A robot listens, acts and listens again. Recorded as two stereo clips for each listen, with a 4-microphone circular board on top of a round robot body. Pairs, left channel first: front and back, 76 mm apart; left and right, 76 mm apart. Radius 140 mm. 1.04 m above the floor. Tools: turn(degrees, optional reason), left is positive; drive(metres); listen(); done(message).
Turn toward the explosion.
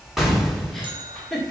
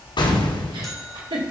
turn(degrees=95, reason="The explosion: 95° left.")
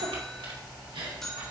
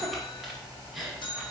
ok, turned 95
done("I heard an explosion from this way, but can't make it out now.")